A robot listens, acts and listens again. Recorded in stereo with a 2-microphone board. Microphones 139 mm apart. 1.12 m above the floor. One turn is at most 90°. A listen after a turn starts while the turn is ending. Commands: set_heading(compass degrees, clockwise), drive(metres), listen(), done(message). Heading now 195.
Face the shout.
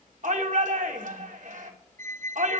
set_heading(255)
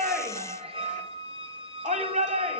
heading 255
set_heading(315)
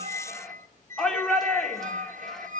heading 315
done("Found it: a shout, straight ahead, 2 to 4 m away.")